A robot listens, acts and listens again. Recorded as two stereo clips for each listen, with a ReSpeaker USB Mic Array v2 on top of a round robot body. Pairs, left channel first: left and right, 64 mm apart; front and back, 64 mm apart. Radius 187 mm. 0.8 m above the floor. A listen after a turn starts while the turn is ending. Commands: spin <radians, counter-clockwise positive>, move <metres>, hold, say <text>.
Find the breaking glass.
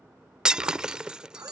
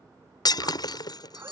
spin -0.26
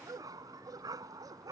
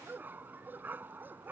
say Facing where the breaking glass came from. I can't hear it now.